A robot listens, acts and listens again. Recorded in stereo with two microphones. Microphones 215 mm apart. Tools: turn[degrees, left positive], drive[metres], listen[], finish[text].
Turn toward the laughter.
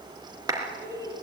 Thought: The laughter: about 20° right or 160° right.
Action: turn[-20]
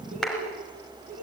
Thought: So it is at 135° right.
Action: turn[-135]
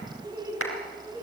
Thought: The laughter is now 10° right.
Action: turn[-10]
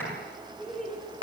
Action: finish[Facing the laughter, 2 to 4 m away.]